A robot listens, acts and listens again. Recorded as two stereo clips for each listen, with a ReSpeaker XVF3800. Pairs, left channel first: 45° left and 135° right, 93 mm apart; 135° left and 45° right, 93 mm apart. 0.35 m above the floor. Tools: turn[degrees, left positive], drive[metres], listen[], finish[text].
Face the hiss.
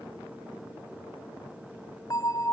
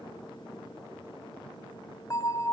Action: listen[]
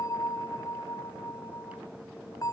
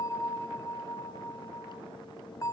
Action: listen[]
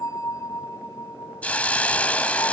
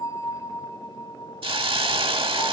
Thought: The hiss: 30° right.
Action: turn[-30]
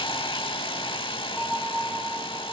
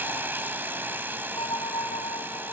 Thought: The hiss is now 25° left.
Action: turn[25]
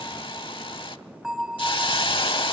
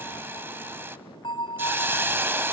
Thought: The hiss is now 20° left.
Action: turn[20]
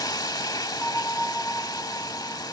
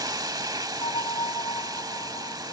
Action: finish[Found it: a hiss, straight ahead.]